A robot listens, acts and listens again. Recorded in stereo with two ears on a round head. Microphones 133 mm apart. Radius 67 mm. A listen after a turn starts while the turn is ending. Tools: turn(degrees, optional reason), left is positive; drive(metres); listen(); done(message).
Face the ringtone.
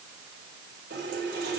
listen()
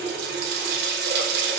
listen()
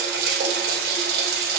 done("I can't make out a ringtone, only a running tap.")